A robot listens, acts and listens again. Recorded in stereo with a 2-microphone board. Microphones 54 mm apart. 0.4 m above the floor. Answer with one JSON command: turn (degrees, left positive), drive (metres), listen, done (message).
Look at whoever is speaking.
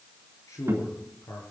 {"turn": 90}
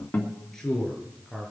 {"done": "Found it: a man speaking, straight ahead, over 4 m away."}